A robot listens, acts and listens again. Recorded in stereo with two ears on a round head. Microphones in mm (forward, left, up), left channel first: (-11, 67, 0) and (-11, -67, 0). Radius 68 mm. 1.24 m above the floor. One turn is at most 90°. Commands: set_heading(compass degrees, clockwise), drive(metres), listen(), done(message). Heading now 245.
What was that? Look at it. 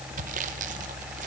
listen()
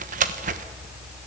set_heading(300)
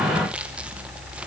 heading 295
listen()
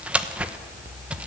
set_heading(305)
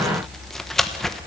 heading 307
done("Found it: sawing, straight ahead, 1 to 2 m away.")